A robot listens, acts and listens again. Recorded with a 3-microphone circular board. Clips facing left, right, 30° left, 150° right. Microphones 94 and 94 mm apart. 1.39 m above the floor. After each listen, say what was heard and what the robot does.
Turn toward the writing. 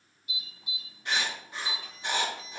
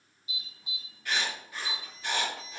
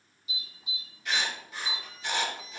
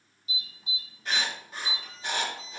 The writing: 155° left. Turn 155° left.
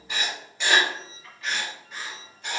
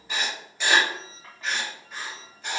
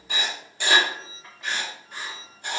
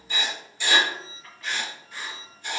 Found it: writing, straight ahead, 1 to 2 m away.